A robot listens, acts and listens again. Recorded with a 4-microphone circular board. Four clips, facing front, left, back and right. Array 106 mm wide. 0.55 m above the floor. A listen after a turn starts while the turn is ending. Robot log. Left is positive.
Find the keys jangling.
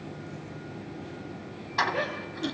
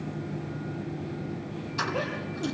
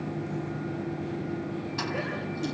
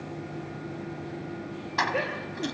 note: The keys jangling: 50° right.
cmd yaw -50
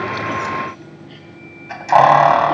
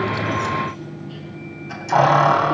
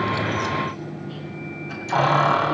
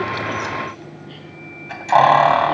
note: The keys jangling is now 30° right.
cmd yaw -30
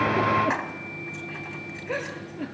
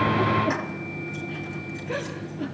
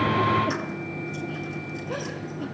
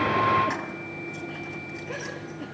cmd idle
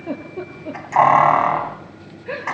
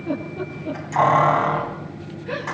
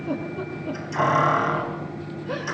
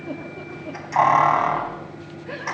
note: The keys jangling is now 10° right.
cmd yaw -10
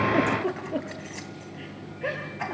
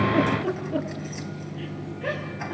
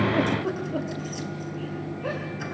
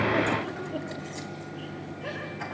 end: Facing the keys jangling, 2 to 4 m away.